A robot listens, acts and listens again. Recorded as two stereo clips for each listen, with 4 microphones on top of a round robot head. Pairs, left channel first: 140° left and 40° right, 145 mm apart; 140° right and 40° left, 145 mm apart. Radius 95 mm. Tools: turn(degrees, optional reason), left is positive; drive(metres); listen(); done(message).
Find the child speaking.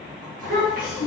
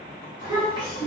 turn(degrees=-25, reason="The child speaking: 25° right.")
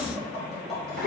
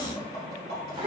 turn(degrees=-15, reason="The child speaking is now 15° right.")
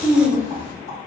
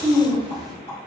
turn(degrees=-20, reason="The child speaking is now 20° right.")
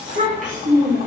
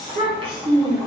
turn(degrees=-20, reason="The child speaking is now 20° right.")
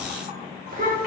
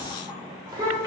turn(degrees=-25, reason="The child speaking is now 25° right.")
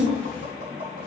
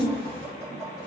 turn(degrees=-10, reason="The child speaking is now 10° right.")
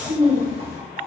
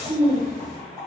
done("Found it: a child speaking, straight ahead.")